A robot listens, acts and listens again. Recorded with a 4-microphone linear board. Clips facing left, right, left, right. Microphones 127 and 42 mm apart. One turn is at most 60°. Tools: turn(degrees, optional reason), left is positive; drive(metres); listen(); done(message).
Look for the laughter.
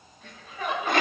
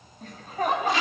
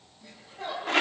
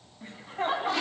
turn(degrees=-45, reason="The laughter: about 45° right or 135° right.")
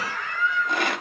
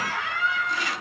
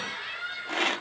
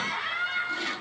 turn(degrees=-60, reason="So it is at 95° right.")
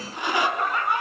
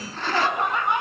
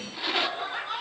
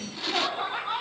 turn(degrees=-25, reason="The laughter is now 25° right.")
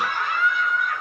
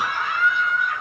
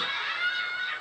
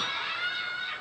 done("Facing the laughter, over 4 m away.")